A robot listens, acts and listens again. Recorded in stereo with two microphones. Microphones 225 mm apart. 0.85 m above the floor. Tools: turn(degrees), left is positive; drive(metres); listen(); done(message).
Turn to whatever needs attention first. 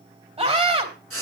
turn(degrees=-25)
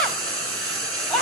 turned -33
done("Found it: a scream, straight ahead, 2 to 4 m away.")